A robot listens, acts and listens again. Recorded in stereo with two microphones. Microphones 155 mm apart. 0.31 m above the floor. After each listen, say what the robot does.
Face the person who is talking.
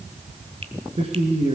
Turn 40° right.
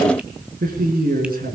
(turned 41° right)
Turn 95° right.
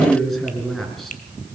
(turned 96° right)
Facing the man speaking.